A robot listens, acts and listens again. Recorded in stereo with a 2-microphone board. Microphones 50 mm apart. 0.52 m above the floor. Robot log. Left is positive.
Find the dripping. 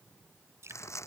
cmd yaw -90
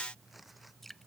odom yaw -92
end: Found it: dripping, straight ahead.